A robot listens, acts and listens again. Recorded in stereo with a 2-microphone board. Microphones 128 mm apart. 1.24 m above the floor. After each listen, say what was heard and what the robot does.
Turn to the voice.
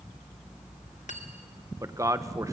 The man speaking: about 25° right or 155° right. Turn 25° right.
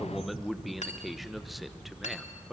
Found it: a man speaking, straight ahead.